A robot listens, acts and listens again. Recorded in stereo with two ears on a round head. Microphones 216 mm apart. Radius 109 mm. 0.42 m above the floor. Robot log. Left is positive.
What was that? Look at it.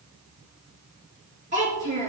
note: The child speaking: about 30° right or 150° right.
cmd yaw -30
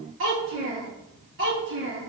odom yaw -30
note: So it is at 125° right.
cmd yaw -125
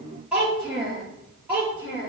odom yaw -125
end: Facing the child speaking, over 4 m away.